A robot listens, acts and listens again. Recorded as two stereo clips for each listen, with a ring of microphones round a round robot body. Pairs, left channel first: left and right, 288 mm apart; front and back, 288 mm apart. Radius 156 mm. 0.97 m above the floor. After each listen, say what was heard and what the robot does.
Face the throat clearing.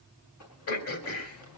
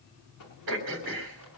The throat clearing: 130° left. Turn 130° left.
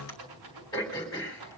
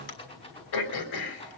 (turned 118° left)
The throat clearing is now 10° left. Turn 10° left.
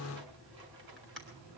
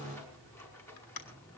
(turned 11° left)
Found it: throat clearing, straight ahead.